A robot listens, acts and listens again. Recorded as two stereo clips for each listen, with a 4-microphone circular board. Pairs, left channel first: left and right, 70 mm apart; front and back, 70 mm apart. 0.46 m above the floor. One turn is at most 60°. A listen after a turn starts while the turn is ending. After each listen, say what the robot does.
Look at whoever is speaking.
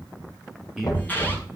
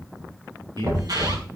Turn 60° right.
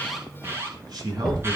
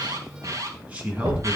Turn 60° right.
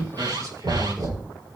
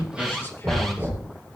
Turn 50° right.
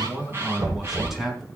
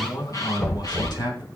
Facing the man speaking.